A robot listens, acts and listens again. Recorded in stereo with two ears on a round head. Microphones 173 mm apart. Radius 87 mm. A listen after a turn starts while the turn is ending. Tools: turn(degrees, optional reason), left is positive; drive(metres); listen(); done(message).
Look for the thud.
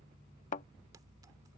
turn(degrees=40, reason="The thud: about 40° left or 140° left.")
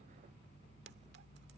listen()
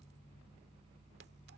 done("I heard a thud, but can't make it out now. It was about straight ahead or 100° left.")